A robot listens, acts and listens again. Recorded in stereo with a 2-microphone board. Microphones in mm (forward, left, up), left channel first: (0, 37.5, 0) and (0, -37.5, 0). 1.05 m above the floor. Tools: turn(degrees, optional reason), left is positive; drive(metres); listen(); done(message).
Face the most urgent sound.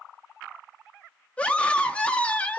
turn(degrees=15, reason="The scream: about 15° left or 165° left.")
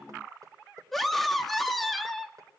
done("Found it: a scream, straight ahead, 2 to 4 m away.")